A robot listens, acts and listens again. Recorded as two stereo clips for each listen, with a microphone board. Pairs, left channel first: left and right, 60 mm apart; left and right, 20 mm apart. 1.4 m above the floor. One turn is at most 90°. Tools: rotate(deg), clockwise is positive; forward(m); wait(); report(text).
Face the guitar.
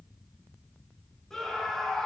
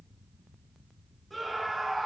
wait()
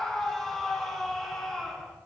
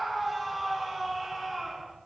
wait()
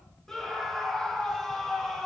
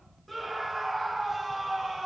report("I can't make out a guitar to turn to.")